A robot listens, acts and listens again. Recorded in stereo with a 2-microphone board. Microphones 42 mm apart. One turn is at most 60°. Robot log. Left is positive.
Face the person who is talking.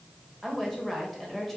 cmd yaw +30
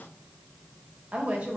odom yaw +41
note: So it is at 35° right.
cmd yaw -35
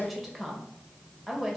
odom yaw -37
end: Facing the woman speaking.